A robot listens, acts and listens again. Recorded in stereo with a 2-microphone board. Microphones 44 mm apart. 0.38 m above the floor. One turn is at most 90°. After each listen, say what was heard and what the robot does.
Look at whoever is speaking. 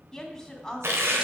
Turn 30° left.
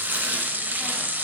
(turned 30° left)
Keep listening.
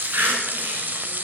Keep listening.
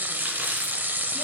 I heard a woman speaking, but can't make it out now. It was about 20° right or 140° left.